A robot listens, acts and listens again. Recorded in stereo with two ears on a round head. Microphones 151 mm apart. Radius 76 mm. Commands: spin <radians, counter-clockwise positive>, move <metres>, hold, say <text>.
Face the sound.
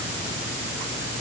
hold
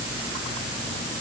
hold
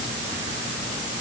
say I can't make out anything.